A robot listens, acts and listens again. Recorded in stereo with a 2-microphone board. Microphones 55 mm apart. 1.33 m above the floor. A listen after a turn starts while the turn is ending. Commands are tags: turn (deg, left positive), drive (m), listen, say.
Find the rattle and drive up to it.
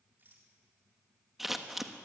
<turn deg="-40"/>
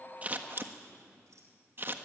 <listen/>
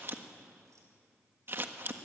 <listen/>
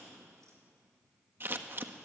<say>I heard a rattle, but can't make it out now. It was about straight ahead or 100° right. I did not reach it.</say>